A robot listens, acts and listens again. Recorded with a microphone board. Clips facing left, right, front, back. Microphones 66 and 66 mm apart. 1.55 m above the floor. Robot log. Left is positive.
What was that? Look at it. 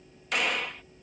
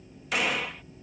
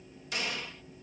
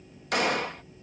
note: The gunshot: 175° right.
cmd yaw -175
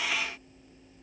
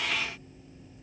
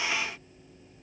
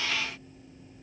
end: I heard a gunshot from this way, but can't make it out now.